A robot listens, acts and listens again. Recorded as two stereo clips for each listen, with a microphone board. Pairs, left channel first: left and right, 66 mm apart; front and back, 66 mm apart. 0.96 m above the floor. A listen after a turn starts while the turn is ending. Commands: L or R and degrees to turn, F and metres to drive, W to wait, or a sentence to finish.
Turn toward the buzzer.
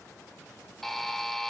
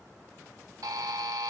L175
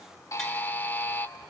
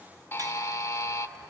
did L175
L30
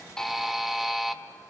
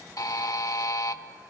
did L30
Found it: a buzzer, straight ahead.